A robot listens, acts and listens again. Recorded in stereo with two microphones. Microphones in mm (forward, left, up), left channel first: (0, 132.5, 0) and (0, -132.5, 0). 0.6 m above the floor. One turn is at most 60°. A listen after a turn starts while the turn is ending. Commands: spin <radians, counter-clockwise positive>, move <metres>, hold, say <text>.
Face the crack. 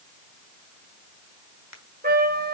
spin 1.05
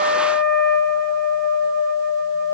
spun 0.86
spin 0.70
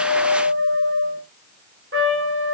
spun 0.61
say Facing where the crack came from. I can't hear it now.